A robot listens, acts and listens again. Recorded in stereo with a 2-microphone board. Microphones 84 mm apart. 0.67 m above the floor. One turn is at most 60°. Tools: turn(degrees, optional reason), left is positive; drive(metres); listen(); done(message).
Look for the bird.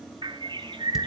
turn(degrees=-60, reason="The bird: about 70° right or 110° right.")
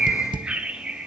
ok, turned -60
turn(degrees=-15, reason="So it is at 15° right.")
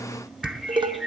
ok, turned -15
done("Facing the bird.")